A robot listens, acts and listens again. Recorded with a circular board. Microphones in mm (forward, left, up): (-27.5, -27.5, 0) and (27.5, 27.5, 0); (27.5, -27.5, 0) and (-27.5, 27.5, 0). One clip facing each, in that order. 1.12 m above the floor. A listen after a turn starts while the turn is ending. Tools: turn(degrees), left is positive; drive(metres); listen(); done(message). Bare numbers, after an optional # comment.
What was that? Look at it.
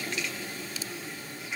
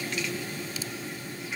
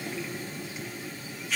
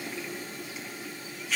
listen()
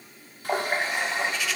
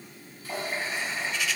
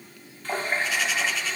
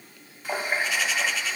# The running tap: 145° right.
turn(-145)
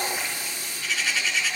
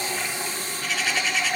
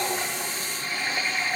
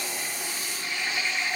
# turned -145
done("Found it: a running tap, straight ahead, under 1 m away.")